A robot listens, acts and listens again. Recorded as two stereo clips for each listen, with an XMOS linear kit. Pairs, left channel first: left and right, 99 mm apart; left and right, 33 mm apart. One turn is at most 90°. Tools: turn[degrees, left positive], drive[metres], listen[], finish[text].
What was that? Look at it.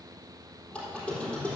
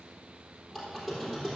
Action: turn[30]
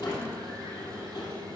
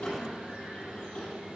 Thought: So it is at 135° left.
Action: turn[90]
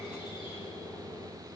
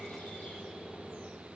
Thought: The squeak is now 50° left.
Action: turn[50]
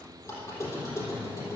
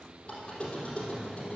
Thought: The squeak is now 30° left.
Action: turn[30]
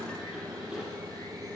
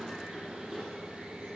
Action: finish[Found it: a squeak, straight ahead.]